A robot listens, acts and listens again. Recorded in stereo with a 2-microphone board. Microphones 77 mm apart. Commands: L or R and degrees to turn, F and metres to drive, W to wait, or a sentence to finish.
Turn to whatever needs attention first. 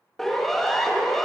L30
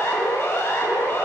L145
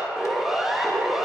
Found it: a siren, straight ahead.